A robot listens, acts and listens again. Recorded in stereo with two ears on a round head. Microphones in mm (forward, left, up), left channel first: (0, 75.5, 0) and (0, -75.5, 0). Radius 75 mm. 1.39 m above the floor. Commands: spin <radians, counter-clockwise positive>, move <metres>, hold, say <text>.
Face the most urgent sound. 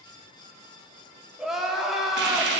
spin 0.52
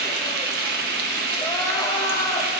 hold
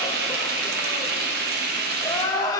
spin 2.71
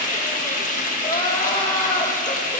spin 0.61
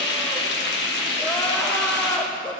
spin 0.17
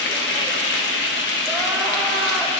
hold
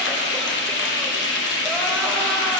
hold
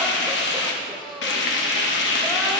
say Found it: crying, straight ahead, under 1 m away.